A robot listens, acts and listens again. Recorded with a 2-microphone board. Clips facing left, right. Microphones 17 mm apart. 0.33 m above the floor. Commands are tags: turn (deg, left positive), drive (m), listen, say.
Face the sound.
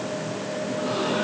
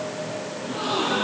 <turn deg="-90"/>
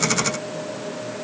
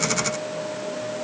<say>I heard a gasp from this way, but can't make it out now.</say>